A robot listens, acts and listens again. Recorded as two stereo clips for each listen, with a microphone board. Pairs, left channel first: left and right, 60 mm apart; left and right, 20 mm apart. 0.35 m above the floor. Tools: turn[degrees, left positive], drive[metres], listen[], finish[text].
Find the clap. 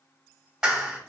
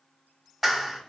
Action: turn[-30]
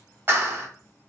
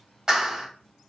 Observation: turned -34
Thought: So it is at 135° right.
Action: turn[-135]
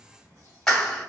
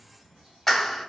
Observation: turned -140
Action: finish[Found it: a clap, straight ahead, 1 to 2 m away.]